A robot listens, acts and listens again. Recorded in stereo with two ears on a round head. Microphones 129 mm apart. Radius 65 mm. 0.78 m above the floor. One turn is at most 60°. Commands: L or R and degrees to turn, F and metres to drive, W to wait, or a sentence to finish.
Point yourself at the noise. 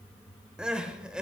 R30
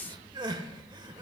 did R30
R60
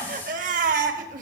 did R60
R60
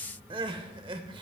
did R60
R40
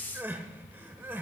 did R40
R15
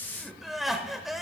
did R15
Facing the crying, under 1 m away.